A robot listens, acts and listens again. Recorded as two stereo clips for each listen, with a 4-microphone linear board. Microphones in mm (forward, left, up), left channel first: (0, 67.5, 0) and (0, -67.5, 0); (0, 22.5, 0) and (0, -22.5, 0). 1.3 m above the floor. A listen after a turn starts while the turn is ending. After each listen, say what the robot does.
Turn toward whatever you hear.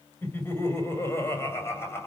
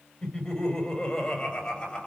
Turn 20° left.
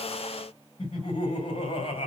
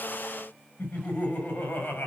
Turn 135° left.
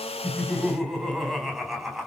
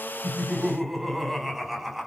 Facing the laughter, over 4 m away.